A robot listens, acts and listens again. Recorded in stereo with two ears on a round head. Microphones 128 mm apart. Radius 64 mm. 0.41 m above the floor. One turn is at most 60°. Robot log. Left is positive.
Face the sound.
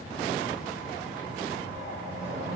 note: The whoosh: about 65° right or 115° right.
cmd yaw -60
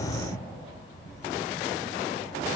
note: So it is at 50° right.
cmd yaw -50
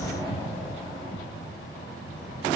note: The whoosh is now 25° right.
cmd yaw -25
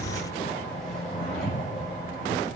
end: Found it: a whoosh, straight ahead.